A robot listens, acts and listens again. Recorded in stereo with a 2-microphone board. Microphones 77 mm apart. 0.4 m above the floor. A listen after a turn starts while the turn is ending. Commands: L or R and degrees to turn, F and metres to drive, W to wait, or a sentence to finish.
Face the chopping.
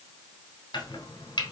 L90
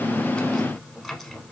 Found it: chopping, straight ahead.